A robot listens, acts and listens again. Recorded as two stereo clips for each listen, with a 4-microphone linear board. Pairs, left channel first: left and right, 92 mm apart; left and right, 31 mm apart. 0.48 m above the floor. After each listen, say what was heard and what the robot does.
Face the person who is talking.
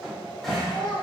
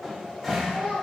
The child speaking: about 65° left or 115° left. Turn 65° left.
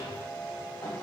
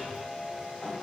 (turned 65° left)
Keep listening.
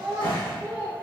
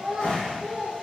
So it is at 30° right. Turn 30° right.
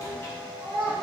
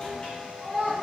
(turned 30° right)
The child speaking is now 30° right. Turn 30° right.
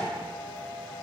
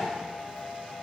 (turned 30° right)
Keep listening.
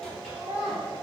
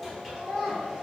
The child speaking is now 20° right. Turn 20° right.
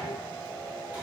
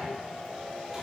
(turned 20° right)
Keep listening.
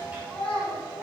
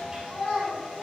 The child speaking is now 10° left. Turn 10° left.
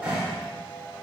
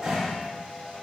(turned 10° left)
Keep listening.
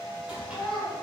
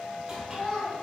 Found it: a child speaking, straight ahead, 2 to 4 m away.